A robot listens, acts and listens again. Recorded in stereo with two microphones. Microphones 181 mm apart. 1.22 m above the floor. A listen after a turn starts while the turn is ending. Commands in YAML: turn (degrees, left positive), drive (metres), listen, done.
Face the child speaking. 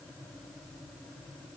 listen: true
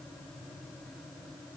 listen: true
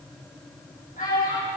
turn: 45
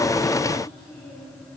listen: true
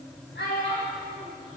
turn: 80
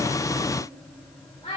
turn: 30
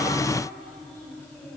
listen: true
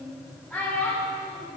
done: "Facing the child speaking, over 4 m away."